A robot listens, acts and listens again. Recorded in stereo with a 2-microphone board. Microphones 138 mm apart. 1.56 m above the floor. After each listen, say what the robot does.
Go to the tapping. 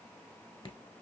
Keep listening.
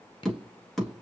Turn 30° left.
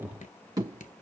Turn 30° right.
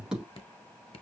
Drive 1.0 m forward.
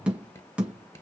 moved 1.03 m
Turn 10° right.
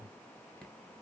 Keep listening.
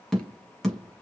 Drive 1.0 m forward.
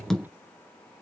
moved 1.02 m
Drive 1.0 m forward.
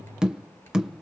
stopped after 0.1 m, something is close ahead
I am next to the tapping.